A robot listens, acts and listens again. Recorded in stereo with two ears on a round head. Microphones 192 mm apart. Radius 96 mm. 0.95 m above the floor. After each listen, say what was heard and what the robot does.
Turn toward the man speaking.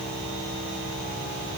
Keep listening.
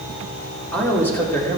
Turn 30° left.
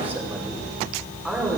Turn 30° left.
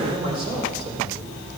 So it is at 25° right. Turn 25° right.
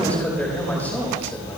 The man speaking is now 10° left. Turn 10° left.
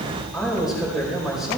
Facing the man speaking, over 4 m away.